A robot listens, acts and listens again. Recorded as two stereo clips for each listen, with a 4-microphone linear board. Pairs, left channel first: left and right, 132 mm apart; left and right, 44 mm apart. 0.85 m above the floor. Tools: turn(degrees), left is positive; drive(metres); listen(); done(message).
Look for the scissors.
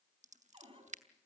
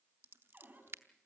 turn(degrees=-65)
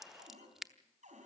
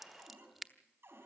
done("Found it: scissors, straight ahead.")